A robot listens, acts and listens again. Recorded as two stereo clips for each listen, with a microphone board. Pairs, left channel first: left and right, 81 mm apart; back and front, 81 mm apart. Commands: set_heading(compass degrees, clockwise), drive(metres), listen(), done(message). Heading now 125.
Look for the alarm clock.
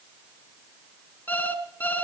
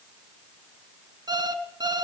set_heading(100)
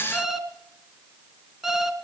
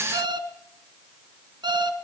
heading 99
done("Facing the alarm clock.")